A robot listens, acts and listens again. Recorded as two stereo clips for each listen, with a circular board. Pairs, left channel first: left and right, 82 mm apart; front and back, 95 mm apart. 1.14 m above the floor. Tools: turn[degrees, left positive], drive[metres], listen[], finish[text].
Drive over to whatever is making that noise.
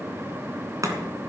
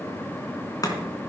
Thought: The chopping: 45° right.
Action: turn[-45]
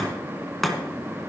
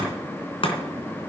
Action: drive[1.0]
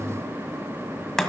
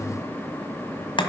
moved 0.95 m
Action: drive[1.0]
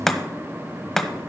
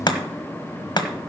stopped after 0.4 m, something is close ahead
Action: finish[Arrived at the chopping, straight ahead.]